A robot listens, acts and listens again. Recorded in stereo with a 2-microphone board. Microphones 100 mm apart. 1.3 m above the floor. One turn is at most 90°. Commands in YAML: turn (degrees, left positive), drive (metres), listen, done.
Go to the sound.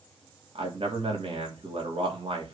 turn: -90
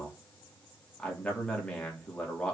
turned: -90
turn: 10
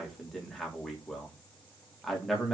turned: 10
drive: 1.0
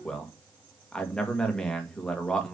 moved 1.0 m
turn: 10
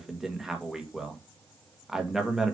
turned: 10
drive: 1.0
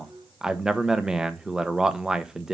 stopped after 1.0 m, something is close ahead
done: "I am next to the man speaking."